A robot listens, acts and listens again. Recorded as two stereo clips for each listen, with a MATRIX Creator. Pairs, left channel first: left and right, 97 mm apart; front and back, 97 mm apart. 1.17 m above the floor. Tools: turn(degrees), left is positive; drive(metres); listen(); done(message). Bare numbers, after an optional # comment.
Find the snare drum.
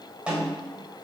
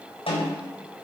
# The snare drum: 10° right.
turn(-10)
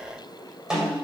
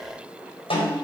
done("Facing the snare drum, 2 to 4 m away.")